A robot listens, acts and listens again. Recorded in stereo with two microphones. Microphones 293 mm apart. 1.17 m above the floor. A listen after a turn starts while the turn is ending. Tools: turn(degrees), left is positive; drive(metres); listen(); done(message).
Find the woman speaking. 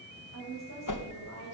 turn(degrees=60)
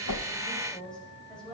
done("Facing the woman speaking.")